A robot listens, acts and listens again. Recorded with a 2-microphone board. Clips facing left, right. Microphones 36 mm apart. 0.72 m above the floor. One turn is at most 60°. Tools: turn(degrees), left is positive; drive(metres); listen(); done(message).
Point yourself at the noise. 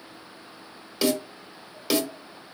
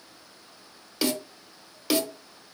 turn(degrees=30)
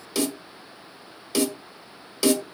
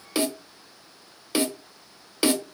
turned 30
turn(degrees=-25)
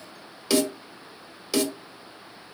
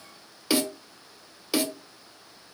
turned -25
turn(degrees=-15)
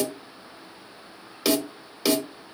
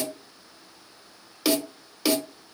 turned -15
done("Found it: a snare drum, straight ahead, under 1 m away.")